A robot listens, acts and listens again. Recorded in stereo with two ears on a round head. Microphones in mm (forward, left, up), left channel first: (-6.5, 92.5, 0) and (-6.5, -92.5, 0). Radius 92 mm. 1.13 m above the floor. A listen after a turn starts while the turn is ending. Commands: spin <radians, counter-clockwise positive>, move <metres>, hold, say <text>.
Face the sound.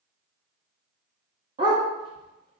spin -0.35
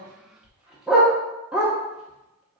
say Found it: a dog barking, straight ahead, under 1 m away.